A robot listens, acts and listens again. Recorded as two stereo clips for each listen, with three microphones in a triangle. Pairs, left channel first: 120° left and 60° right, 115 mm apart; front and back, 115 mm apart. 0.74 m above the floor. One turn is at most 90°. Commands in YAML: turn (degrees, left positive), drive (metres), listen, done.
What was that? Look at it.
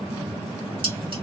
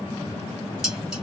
turn: -90
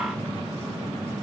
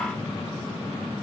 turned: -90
listen: true
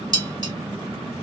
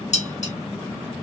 done: "Found it: dishes clattering, straight ahead, 1 to 2 m away."